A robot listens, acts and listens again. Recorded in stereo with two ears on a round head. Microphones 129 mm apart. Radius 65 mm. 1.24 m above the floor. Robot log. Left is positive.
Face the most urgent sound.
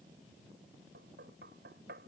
cmd idle
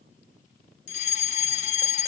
note: The fire alarm: about 50° left or 130° left.
cmd yaw +50
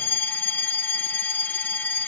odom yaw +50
note: So it is at 15° left.
cmd yaw +15
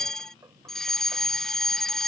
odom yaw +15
end: Facing the fire alarm.